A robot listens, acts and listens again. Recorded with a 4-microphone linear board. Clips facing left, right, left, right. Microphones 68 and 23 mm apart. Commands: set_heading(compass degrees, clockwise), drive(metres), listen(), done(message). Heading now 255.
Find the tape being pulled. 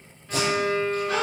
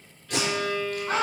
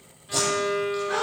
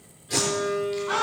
set_heading(345)
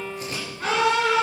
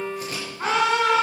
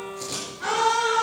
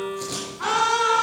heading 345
done("Found it: tape being pulled, straight ahead, over 4 m away.")